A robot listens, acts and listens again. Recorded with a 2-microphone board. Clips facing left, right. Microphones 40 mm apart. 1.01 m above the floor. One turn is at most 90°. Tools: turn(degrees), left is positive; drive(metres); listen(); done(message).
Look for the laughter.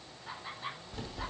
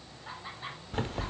turn(degrees=-30)
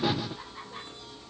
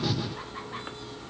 listen()
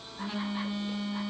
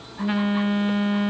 listen()
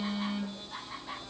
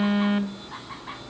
turn(degrees=-90)
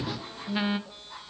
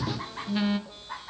turn(degrees=-50)
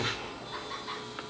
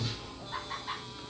done("Facing the laughter, over 4 m away.")